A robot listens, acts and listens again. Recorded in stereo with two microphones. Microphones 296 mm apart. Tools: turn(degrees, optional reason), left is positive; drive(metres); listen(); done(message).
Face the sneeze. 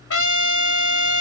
listen()
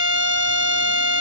listen()
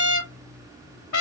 done("I can't make out a sneeze to turn to.")